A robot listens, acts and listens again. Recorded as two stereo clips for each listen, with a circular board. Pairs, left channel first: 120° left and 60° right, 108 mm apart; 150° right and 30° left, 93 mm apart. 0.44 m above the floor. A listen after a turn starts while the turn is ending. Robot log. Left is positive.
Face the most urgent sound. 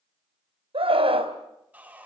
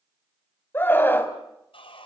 note: The scream: 85° right.
cmd yaw -85
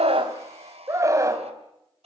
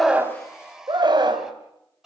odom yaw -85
end: Facing the scream.